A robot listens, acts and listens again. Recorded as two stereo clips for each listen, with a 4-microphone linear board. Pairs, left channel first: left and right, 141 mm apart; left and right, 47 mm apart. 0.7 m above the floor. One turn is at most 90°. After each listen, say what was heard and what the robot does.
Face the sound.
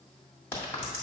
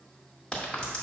The crack: about 15° left or 165° left. Turn 15° left.
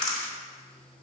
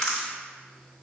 Facing the crack, 1 to 2 m away.